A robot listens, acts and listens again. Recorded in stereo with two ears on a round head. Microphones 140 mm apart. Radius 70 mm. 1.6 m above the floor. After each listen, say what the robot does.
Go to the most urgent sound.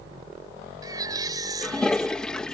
Turn 25° right.
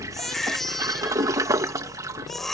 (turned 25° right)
Drive 1.0 m forward.
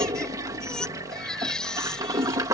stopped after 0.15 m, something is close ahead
Something is in my way. I am facing the baby crying but have not reached it.